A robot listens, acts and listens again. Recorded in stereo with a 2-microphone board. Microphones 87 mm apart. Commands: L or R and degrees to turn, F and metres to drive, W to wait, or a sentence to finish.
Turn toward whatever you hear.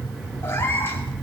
L25
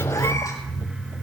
W
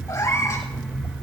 L35
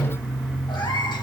L120
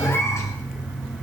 L35
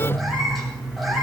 Facing the cat meowing, over 4 m away.